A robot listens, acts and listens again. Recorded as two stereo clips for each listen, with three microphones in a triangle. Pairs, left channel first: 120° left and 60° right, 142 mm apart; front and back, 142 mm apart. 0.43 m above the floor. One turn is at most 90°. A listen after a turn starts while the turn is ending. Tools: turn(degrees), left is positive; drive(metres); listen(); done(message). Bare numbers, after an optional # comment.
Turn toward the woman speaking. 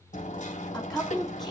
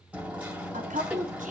# The woman speaking: 150° right.
turn(-90)
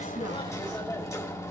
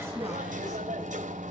# Nothing new. It was at 60° right.
turn(-60)
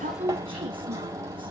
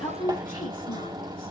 # The woman speaking is now 10° right.
turn(-10)
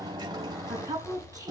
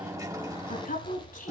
done("Facing the woman speaking.")